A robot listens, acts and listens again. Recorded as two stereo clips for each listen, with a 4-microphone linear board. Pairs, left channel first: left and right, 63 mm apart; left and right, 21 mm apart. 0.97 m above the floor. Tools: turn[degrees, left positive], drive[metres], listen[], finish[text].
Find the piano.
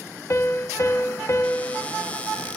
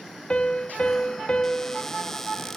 Thought: The piano: about 50° left or 130° left.
Action: turn[50]
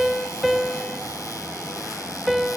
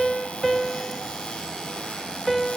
Action: finish[Facing the piano, under 1 m away.]